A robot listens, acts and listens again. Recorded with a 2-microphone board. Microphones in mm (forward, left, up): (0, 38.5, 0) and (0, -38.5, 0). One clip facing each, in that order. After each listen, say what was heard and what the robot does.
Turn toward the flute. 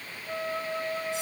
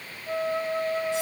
The flute: about 30° right or 150° right. Turn 30° right.
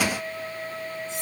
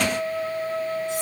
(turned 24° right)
So it is at 120° right. Turn 120° right.
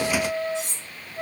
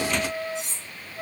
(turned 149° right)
The flute is now 25° left. Turn 25° left.
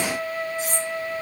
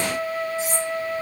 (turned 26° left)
Found it: a flute, straight ahead, 1 to 2 m away.